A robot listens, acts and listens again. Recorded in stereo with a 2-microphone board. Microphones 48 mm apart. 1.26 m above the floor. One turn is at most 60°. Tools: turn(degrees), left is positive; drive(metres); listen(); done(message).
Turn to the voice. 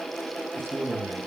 turn(degrees=-55)
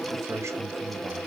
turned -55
turn(degrees=-60)
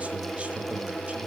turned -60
turn(degrees=-10)
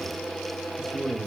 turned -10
turn(degrees=-20)
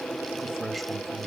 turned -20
done("Facing the man speaking.")